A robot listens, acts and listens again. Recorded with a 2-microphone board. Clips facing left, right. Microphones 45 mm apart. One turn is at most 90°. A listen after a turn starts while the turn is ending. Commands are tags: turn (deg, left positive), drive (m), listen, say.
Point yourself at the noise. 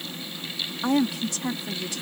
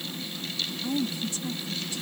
<turn deg="90"/>
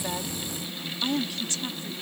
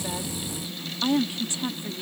<turn deg="-20"/>
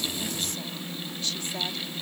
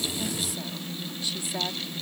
<turn deg="-10"/>
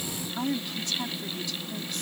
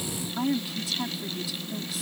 <say>Found it: a woman speaking, straight ahead.</say>